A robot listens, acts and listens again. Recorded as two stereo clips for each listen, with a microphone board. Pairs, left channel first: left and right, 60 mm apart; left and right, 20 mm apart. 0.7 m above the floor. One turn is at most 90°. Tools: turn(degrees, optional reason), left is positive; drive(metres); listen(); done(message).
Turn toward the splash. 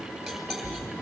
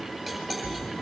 turn(degrees=25, reason="The splash: about 25° left or 155° left.")
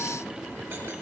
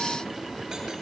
listen()
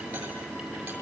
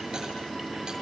done("I heard a splash, but can't make it out now. It was about straight ahead or 130° left.")